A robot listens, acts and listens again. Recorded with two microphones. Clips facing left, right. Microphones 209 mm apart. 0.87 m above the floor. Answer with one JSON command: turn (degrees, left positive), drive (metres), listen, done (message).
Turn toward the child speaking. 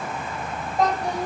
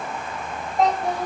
{"turn": -30}
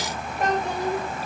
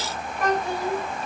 {"turn": 20}
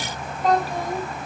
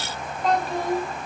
{"done": "Found it: a child speaking, straight ahead, 2 to 4 m away."}